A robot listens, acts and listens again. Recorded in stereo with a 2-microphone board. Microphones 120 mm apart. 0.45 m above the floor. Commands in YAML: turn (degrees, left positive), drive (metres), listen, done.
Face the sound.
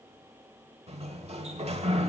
turn: -60
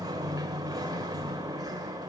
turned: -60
turn: -40
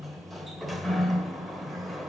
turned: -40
done: "Found it: a sliding door, straight ahead, 1 to 2 m away."